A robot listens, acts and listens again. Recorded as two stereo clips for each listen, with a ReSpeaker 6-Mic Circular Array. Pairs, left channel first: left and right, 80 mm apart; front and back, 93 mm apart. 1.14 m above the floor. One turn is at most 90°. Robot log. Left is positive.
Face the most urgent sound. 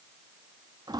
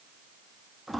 cmd idle
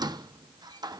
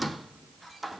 cmd idle
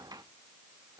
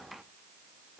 end: I can't make out anything urgent to turn to.